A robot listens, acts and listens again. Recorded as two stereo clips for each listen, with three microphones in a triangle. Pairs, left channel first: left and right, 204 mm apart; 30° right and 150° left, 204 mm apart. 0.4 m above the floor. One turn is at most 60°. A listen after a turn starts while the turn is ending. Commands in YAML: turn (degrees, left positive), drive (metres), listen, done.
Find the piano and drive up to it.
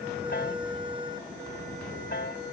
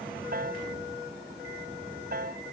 turn: 60
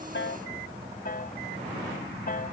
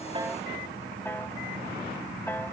turn: 50
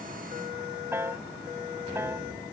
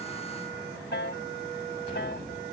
turn: -10
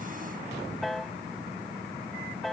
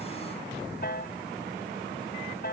drive: 1.0
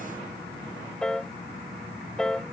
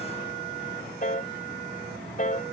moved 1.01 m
drive: 1.0
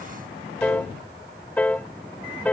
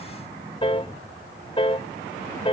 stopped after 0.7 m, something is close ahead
turn: 10
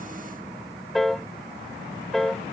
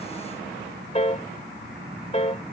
done: "I am next to the piano."